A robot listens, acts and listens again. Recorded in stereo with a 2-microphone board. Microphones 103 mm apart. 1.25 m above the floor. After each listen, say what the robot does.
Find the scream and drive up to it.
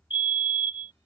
Keep listening.
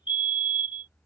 Keep listening.
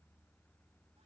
I can't make out a scream, only a fire alarm.